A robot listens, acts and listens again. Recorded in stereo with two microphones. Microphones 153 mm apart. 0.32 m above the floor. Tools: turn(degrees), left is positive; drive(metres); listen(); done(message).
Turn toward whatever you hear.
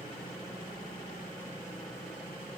listen()
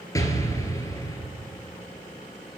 turn(degrees=20)
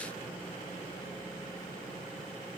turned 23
listen()
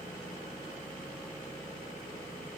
done("I heard an explosion, but can't make it out now. It was about straight ahead or 135° left.")